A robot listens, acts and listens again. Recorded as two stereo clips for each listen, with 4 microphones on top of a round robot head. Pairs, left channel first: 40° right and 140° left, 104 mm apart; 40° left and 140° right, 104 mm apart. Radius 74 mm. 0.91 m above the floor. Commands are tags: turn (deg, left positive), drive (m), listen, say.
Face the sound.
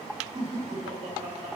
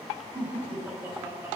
<turn deg="150"/>
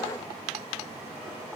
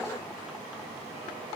<listen/>
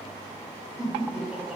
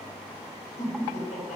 <turn deg="55"/>
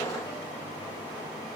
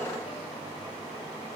<listen/>
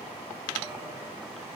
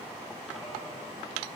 <listen/>
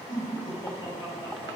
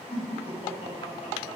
<turn deg="10"/>
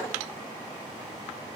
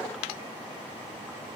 <listen/>
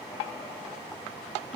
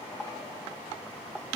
<say>Found it: laughter, straight ahead, over 4 m away.</say>